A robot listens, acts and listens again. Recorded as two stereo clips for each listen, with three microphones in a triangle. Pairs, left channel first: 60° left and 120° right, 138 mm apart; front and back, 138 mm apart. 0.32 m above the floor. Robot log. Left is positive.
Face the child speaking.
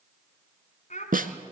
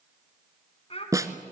note: The child speaking: 40° left.
cmd yaw +40
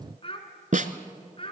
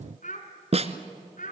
note: The child speaking is now 10° left.
cmd yaw +10
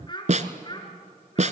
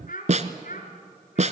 end: Facing the child speaking.